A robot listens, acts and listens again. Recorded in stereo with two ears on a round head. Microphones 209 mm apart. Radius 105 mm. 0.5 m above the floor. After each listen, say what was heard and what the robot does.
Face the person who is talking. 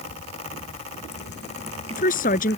The woman speaking: about 35° left or 145° left. Turn 35° left.
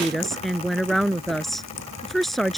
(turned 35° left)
Facing the woman speaking.